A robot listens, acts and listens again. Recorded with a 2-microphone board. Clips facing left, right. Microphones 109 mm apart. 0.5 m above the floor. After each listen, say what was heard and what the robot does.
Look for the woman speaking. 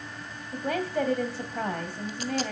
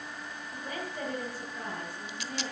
The woman speaking: about 70° left or 110° left. Turn 70° left.
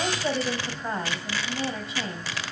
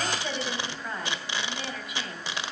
So it is at 30° left. Turn 30° left.
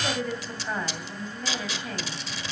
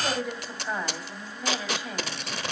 The woman speaking is now 10° right. Turn 10° right.
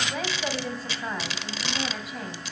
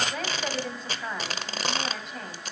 Found it: a woman speaking, straight ahead.